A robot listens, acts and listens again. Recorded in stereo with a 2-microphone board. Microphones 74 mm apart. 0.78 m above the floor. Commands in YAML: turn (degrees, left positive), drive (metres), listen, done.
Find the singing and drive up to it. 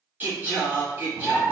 turn: -25
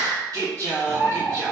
turn: -130
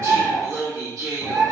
turn: -50
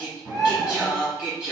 turn: -20
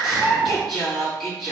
drive: 1.0
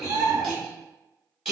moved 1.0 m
turn: -10
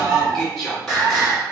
drive: 1.0
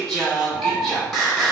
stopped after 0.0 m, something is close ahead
done: "I am next to the singing."